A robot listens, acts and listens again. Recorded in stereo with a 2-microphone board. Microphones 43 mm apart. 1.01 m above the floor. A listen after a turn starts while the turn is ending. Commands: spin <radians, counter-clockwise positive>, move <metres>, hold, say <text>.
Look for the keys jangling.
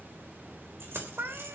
spin -1.22
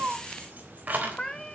spin -0.70
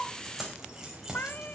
spin -0.17
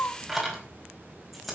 say Facing the keys jangling.